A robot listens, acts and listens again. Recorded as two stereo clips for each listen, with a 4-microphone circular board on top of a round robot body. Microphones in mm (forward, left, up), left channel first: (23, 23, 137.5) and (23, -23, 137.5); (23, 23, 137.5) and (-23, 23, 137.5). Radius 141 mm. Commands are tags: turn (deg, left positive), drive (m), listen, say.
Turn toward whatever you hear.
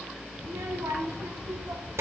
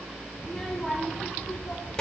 <turn deg="-75"/>
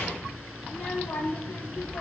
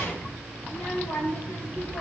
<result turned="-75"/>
<turn deg="35"/>
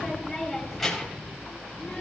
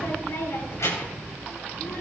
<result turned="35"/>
<say>Facing the child speaking.</say>